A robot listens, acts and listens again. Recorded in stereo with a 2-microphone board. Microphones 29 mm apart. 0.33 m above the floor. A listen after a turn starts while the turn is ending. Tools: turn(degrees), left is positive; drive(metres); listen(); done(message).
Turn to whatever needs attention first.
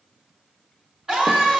turn(degrees=-35)
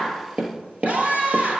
turn(degrees=-110)
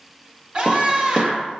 turn(degrees=-30)
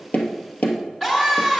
turn(degrees=15)
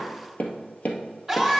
done("Found it: a scream, straight ahead, 2 to 4 m away.")